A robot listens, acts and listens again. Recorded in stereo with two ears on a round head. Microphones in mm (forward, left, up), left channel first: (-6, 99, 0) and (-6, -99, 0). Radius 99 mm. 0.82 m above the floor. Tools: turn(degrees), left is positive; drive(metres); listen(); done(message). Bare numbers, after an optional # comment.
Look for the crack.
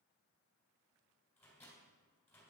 listen()
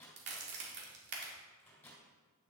# The crack: about 55° right or 125° right.
turn(-55)
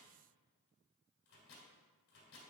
listen()
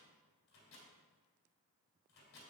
done("I heard a crack, but can't make it out now. It was about straight ahead or 70° right.")